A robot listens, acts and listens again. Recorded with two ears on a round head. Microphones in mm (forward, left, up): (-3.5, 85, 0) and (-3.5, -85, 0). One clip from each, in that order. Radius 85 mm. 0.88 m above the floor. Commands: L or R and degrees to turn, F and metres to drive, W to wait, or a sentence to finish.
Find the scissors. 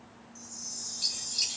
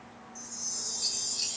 L90
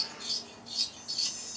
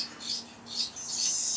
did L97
Found it: scissors, straight ahead.